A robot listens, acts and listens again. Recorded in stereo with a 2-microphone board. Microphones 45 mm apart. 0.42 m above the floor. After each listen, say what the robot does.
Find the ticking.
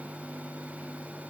Keep listening.
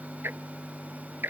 Turn 50° right.
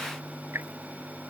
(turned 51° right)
Turn 80° right.
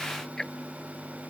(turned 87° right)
Turn 10° left.
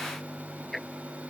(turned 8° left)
Found it: ticking, straight ahead.